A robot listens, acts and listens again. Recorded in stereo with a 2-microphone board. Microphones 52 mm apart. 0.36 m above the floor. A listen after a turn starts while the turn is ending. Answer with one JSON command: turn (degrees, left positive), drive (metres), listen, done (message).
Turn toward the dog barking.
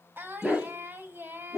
{"turn": -30}
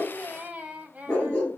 {"turn": 25}
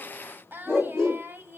{"turn": 10}
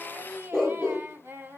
{"turn": 10}
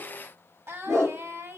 {"done": "Facing the dog barking."}